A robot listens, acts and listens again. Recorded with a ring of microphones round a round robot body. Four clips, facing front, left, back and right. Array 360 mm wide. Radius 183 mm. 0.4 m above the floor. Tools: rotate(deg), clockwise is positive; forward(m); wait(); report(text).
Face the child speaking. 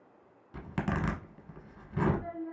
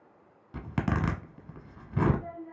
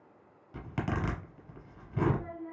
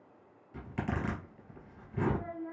rotate(120)
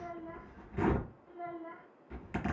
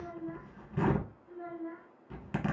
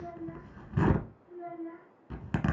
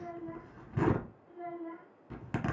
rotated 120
report("Facing the child speaking.")